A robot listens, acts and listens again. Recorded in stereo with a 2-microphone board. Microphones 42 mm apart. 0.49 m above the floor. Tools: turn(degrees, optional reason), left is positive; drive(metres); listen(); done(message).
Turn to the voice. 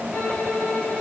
listen()
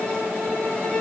listen()
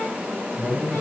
turn(degrees=-25, reason="The man speaking: about 25° right or 155° right.")
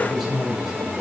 done("Facing the man speaking.")